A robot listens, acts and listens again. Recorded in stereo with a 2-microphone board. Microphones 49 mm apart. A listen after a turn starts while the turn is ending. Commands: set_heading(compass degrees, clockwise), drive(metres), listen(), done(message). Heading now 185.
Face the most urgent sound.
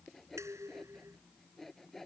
listen()
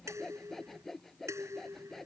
listen()
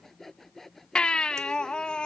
set_heading(165)
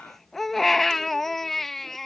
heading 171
done("Found it: a baby crying, straight ahead.")